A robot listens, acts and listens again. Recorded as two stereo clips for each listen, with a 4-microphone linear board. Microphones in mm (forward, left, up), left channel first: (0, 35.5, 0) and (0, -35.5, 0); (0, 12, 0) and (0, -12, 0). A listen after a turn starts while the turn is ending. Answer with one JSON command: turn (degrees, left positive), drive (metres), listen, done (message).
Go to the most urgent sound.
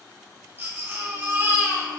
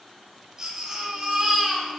{"turn": -30}
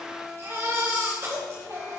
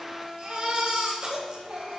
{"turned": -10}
{"turn": -40}
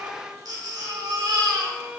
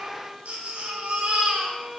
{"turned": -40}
{"turn": -100}
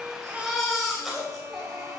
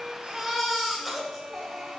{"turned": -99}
{"drive": 1.0}
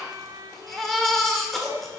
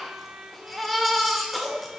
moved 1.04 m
{"drive": 1.0}
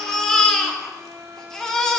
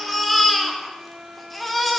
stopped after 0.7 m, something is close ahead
{"turn": 10}
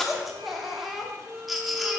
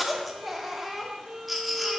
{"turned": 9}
{"done": "I am next to the baby crying."}